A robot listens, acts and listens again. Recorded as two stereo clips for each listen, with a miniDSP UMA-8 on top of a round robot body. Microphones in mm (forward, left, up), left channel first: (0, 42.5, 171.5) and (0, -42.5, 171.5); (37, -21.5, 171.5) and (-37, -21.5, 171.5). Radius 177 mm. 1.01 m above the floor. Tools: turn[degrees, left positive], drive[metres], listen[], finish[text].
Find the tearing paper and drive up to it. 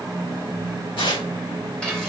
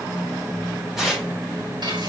Thought: The tearing paper: 95° left.
Action: turn[95]
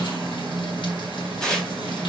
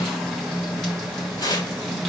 Action: drive[1.0]
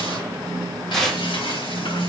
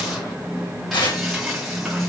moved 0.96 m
Action: drive[1.0]
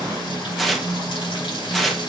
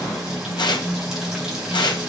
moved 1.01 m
Action: drive[1.0]
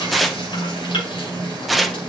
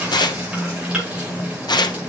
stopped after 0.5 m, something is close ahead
Action: finish[I am next to the tearing paper.]